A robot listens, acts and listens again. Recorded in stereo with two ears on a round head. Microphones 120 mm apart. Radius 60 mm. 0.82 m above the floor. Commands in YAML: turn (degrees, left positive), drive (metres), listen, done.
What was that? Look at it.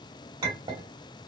turn: -30
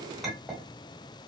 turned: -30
done: "Found it: a clink, straight ahead, 1 to 2 m away."